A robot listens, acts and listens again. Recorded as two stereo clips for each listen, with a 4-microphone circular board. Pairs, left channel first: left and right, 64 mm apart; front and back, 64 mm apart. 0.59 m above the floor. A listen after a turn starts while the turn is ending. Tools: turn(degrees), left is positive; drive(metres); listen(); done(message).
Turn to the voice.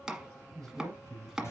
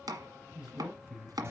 turn(degrees=-105)
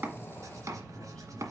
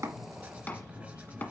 listen()
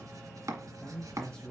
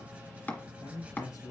turn(degrees=10)
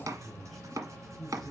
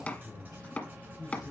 done("Facing the man speaking.")